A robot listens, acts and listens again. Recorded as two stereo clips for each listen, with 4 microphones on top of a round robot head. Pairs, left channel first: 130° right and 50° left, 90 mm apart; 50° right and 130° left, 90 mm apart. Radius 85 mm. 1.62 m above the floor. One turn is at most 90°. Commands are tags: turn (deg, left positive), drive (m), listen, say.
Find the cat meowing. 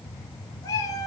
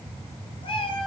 <turn deg="-75"/>
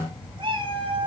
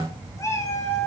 <turn deg="15"/>
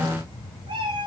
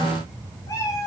<turn deg="10"/>
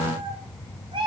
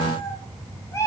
<turn deg="15"/>
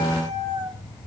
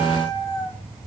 <say>Found it: a cat meowing, straight ahead.</say>